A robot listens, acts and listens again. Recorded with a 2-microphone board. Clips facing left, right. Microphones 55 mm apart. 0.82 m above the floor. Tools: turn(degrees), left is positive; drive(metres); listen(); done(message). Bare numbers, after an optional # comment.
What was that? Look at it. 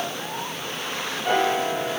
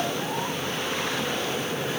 turn(90)
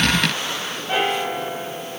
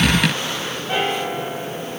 done("Facing the piano.")